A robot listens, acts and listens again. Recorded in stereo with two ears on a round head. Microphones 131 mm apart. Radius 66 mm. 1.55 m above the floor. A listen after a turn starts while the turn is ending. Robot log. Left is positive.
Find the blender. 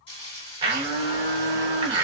note: The blender: about 35° right or 145° right.
cmd yaw -35
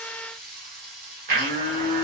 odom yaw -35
note: So it is at 110° right.
cmd yaw -110
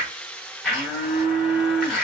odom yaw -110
end: Facing the blender, under 1 m away.